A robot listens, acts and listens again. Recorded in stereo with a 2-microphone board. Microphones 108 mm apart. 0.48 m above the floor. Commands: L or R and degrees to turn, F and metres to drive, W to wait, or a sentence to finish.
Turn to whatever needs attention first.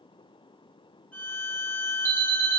R20
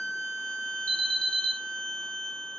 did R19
R145
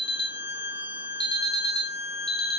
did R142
Facing the alarm.